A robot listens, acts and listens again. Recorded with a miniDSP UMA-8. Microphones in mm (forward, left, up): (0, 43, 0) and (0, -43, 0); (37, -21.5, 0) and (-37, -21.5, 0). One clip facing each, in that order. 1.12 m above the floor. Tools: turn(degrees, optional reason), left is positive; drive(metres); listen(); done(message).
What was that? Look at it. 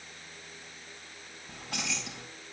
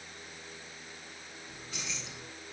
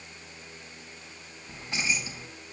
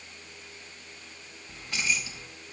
turn(degrees=65, reason="The keys jangling: 65° left.")
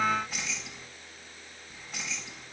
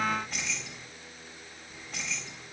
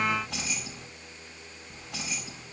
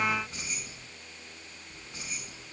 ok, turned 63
done("Facing the keys jangling, over 4 m away.")